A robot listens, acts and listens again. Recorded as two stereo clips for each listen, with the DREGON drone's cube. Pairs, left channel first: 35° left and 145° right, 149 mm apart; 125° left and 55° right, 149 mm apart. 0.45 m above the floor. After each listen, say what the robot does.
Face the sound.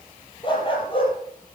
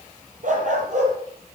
Turn 20° right.
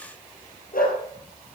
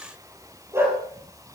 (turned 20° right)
Turn 20° left.
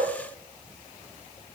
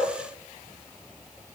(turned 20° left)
Keep listening.
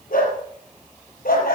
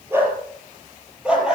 Turn 30° left.
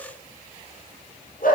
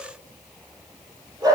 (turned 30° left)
Turn 10° left.
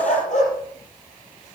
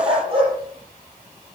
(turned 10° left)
Facing the dog barking.